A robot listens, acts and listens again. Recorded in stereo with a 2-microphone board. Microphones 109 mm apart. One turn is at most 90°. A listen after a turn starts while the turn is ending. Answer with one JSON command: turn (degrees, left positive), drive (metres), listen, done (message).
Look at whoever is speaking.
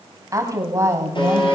{"turn": -25}
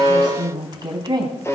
{"turn": -40}
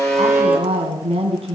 {"turn": -90}
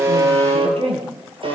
{"turn": -60}
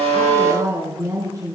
{"turn": -30}
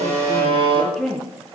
{"done": "Facing the woman speaking, over 4 m away."}